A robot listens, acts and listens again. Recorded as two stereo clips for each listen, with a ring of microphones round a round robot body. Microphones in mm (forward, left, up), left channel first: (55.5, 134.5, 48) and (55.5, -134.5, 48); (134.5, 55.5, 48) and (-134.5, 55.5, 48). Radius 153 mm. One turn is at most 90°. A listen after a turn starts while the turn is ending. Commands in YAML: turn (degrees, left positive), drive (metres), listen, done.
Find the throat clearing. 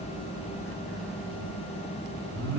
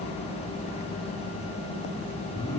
listen: true
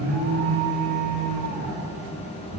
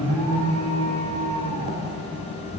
listen: true
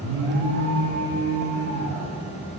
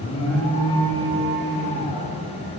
done: "I can't make out throat clearing to turn to."